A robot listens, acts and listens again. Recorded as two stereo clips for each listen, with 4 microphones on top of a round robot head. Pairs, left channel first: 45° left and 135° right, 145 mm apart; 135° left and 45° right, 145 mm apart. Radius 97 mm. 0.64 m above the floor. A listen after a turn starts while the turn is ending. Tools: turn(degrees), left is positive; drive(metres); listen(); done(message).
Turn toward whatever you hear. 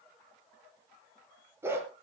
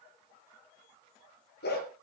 turn(degrees=150)
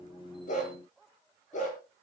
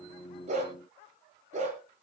done("Found it: a dog barking, straight ahead.")